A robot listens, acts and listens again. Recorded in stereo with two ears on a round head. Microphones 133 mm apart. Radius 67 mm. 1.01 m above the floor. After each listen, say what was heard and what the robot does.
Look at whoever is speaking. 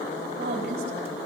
The woman speaking: about 75° right or 105° right. Turn 75° right.
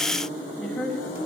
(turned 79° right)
Found it: a woman speaking, straight ahead, over 4 m away.